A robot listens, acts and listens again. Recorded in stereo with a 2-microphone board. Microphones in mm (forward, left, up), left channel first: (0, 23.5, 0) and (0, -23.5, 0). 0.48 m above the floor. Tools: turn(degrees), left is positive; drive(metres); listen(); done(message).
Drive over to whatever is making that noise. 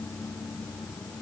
listen()
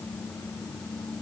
listen()
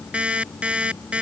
turn(degrees=-25)
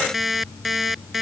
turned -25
drive(metres=1.0)
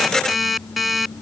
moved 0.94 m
drive(metres=1.0)
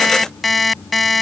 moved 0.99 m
drive(metres=1.0)
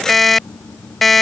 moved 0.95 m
drive(metres=1.0)
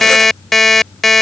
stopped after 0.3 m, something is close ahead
done("Arrived at the alarm clock, straight ahead.")